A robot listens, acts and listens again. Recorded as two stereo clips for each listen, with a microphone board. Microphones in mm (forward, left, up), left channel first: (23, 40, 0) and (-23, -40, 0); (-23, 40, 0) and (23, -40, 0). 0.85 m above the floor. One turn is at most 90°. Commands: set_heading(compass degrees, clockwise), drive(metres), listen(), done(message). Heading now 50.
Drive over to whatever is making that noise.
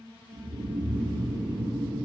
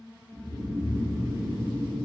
set_heading(140)
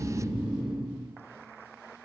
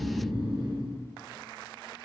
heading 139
set_heading(169)
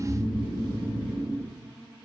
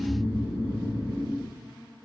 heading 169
drive(1.0)
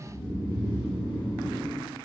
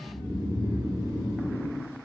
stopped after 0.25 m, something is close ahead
done("Something is in my way. I am facing the snoring but have not reached it.")